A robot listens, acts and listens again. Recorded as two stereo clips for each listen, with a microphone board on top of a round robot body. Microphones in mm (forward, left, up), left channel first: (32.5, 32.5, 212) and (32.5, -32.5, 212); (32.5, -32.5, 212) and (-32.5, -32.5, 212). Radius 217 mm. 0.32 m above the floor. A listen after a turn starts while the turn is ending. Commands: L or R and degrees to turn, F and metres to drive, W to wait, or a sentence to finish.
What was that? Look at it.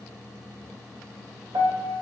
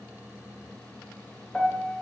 R80
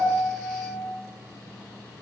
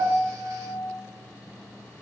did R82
Facing the piano, 1 to 2 m away.